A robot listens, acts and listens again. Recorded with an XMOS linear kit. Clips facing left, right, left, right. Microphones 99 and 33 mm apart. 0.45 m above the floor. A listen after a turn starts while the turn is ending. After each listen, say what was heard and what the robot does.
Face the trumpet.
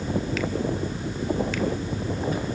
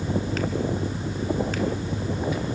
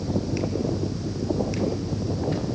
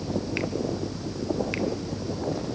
Keep listening.
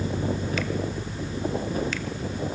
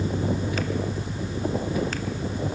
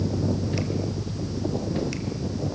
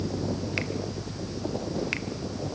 Keep listening.
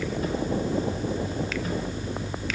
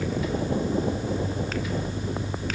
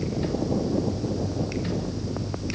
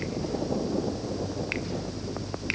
I can't make out a trumpet.